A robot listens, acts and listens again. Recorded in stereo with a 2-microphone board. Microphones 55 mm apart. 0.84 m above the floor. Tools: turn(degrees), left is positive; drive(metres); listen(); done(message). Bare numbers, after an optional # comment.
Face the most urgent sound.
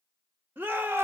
# The shout: about 40° right or 140° right.
turn(-40)
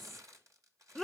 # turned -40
done("Found it: a shout, straight ahead.")